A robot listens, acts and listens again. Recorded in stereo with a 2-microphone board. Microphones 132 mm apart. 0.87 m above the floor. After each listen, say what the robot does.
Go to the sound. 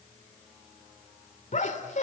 Turn 65° left.
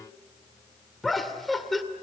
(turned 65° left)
Drive 1.0 m forward.
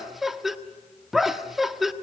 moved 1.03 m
Drive 1.0 m forward.
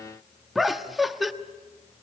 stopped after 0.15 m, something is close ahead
I am next to the laughter.